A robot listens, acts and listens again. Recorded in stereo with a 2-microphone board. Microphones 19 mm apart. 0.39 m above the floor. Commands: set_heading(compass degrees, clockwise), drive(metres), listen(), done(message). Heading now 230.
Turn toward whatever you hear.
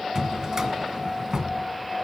set_heading(270)
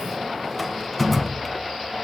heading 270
done("Found it: a drawer, straight ahead.")